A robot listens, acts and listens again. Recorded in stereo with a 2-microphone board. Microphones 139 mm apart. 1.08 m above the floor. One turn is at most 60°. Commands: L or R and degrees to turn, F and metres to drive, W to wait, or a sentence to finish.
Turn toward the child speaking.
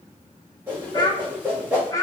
L25
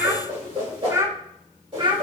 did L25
R35
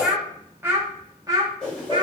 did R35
R35
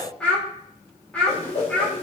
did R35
L10
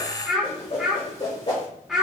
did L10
Found it: a child speaking, straight ahead.